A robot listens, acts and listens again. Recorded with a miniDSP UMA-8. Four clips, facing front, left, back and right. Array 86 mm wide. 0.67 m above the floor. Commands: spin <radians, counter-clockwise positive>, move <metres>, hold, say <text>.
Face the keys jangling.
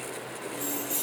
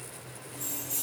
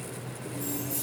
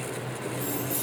spin -0.26
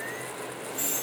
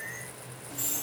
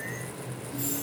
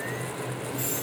spin -0.17
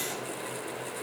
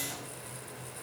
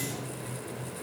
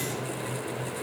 hold
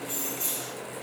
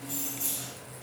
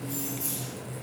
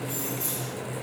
spin -0.17
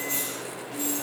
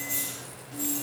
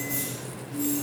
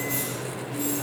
spin -0.35
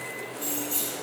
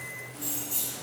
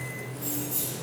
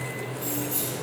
spin -0.17
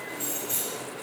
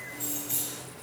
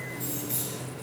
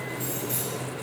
say Facing the keys jangling, 2 to 4 m away.